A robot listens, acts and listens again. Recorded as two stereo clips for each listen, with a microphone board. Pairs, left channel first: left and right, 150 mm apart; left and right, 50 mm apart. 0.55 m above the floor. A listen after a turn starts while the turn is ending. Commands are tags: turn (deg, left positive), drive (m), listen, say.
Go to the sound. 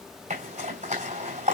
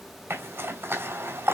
<turn deg="-60"/>
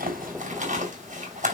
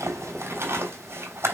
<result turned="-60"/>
<turn deg="-60"/>
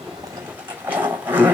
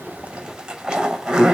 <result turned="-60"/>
<turn deg="-10"/>
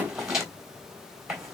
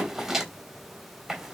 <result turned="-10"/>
<drive m="1.0"/>
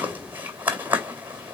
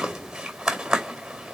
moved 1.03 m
<turn deg="-15"/>
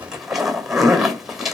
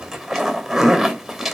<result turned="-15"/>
<drive m="1.0"/>
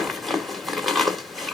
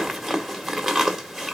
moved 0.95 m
<drive m="1.0"/>
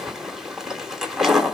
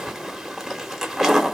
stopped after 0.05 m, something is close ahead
<say>I am next to the zipper.</say>